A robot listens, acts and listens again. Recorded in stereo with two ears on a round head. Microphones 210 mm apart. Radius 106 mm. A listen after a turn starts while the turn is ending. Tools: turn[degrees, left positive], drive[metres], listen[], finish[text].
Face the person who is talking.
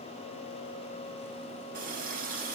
Action: listen[]
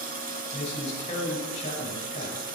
Thought: The man speaking: about 30° left or 150° left.
Action: turn[30]
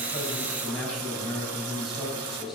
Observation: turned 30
Action: finish[Facing the man speaking.]